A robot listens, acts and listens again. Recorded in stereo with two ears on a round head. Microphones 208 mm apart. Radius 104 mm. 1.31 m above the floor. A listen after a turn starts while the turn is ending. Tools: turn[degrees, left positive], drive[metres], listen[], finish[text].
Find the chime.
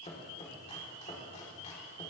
Action: listen[]
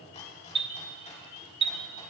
Thought: The chime: about 25° right or 155° right.
Action: turn[-25]
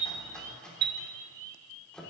Thought: So it is at 125° right.
Action: turn[-125]
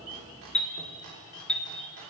Action: finish[Found it: a chime, straight ahead.]